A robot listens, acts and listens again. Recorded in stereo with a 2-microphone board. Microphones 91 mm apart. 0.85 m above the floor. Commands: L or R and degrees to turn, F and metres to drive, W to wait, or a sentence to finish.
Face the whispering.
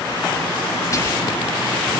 L35
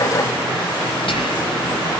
L110
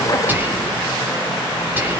R20
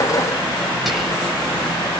Facing the whispering.